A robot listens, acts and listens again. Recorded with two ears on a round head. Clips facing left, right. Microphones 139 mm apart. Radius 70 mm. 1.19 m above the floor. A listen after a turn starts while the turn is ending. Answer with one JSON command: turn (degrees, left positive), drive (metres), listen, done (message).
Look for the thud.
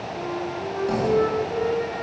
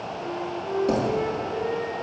{"turn": -25}
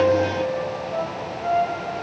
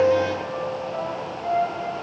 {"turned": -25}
{"listen": true}
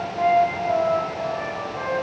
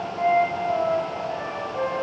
{"done": "I heard a thud, but can't make it out now. It was about straight ahead or 130° right."}